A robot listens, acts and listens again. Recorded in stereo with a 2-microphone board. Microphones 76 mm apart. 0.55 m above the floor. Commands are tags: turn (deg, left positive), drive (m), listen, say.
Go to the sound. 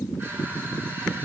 <listen/>
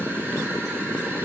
<listen/>
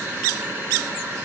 <turn deg="-30"/>
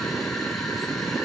<listen/>
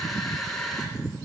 <drive m="1.0"/>
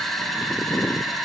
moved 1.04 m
<drive m="1.0"/>
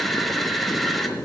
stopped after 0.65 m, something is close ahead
<say>Arrived at the crushing, straight ahead.</say>